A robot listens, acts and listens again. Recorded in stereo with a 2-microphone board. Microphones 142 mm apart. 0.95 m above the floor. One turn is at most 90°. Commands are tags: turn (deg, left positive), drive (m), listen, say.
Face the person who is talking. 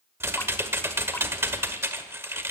<listen/>
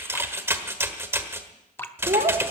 <turn deg="-75"/>
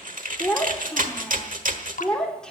<say>Facing the child speaking, 2 to 4 m away.</say>